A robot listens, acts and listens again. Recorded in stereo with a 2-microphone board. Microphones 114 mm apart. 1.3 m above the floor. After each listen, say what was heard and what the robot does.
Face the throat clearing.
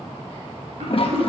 Turn 90° right.
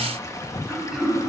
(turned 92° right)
Found it: throat clearing, straight ahead.